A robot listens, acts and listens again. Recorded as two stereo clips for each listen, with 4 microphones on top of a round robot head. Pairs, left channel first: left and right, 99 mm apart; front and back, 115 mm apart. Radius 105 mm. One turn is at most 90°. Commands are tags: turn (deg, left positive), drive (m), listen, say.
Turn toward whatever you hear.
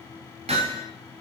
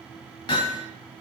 <turn deg="-55"/>
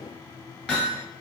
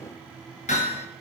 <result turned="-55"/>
<say>Found it: hammering, straight ahead.</say>